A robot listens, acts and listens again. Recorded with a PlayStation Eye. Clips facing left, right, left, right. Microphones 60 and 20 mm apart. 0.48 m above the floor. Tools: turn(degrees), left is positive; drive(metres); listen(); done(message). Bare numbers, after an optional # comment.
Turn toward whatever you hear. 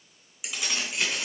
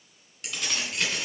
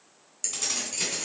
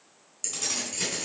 turn(30)
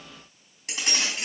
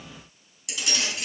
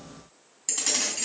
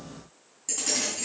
# So it is at 135° left.
turn(135)
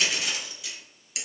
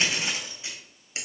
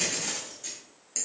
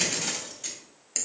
# The keys jangling is now 35° right.
turn(-35)
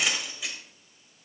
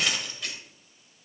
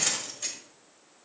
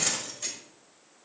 done("Found it: keys jangling, straight ahead, 1 to 2 m away.")